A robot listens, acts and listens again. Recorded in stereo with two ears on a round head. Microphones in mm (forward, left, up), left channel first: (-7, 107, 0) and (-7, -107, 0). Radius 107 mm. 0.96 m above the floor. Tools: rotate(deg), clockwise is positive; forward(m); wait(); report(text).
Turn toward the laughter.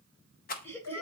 rotate(-30)
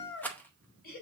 rotate(-140)
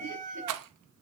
wait()
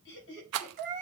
rotate(-50)
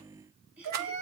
report("Found it: laughter, straight ahead.")